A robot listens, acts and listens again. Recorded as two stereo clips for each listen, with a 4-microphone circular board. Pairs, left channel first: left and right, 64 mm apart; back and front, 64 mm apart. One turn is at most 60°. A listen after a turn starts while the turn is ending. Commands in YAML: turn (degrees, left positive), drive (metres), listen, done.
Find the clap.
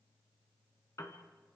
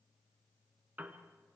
listen: true
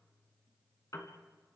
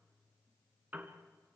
listen: true
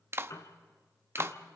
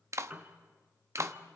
turn: -40
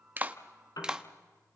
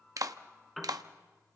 turn: -15
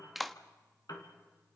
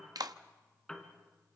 done: "Facing the clap."